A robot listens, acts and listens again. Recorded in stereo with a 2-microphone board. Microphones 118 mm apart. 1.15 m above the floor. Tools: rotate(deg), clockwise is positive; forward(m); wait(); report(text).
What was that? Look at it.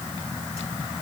wait()
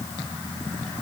wait()
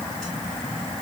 report("I can't make out anything to turn to.")